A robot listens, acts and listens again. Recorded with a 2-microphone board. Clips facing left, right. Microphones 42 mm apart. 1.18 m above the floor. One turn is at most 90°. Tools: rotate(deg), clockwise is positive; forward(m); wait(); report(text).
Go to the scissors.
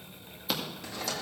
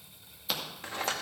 rotate(-30)
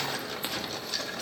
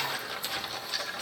wait()
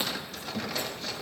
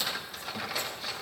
rotate(-90)
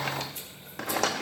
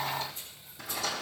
rotate(-70)
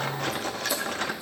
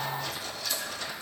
wait()
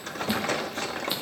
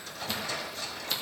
rotate(-15)
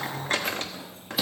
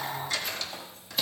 forward(1.0)
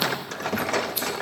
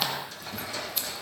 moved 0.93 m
forward(1.0)
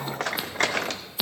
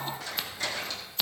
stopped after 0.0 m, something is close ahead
report("I am next to the scissors.")